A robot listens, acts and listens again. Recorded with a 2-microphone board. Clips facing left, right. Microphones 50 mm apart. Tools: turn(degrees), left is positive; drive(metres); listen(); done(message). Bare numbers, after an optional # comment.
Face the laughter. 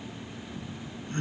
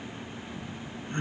# The laughter: about 20° right or 160° right.
turn(-20)
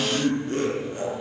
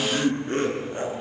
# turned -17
# So it is at 145° right.
turn(-145)
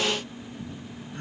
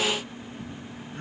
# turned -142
done("Found it: laughter, straight ahead.")